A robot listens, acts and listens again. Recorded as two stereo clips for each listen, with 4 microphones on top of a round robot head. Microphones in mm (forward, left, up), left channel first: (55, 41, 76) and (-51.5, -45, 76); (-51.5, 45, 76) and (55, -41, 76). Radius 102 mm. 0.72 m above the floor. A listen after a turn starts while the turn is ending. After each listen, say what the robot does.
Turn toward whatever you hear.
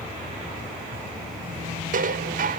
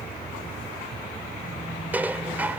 Turn 120° right.
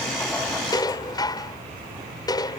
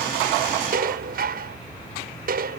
Turn 25° right.
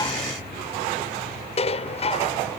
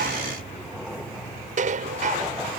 Facing the dishes clattering.